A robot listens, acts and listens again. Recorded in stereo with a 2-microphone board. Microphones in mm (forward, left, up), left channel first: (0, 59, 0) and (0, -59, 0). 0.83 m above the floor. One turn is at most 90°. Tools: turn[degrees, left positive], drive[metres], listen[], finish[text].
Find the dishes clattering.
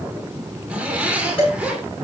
Thought: The dishes clattering: about 50° left or 130° left.
Action: turn[50]
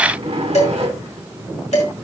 Thought: So it is at 75° left.
Action: turn[75]
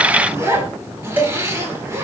Thought: The dishes clattering is now 15° right.
Action: turn[-15]
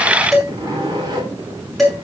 Action: finish[Facing the dishes clattering.]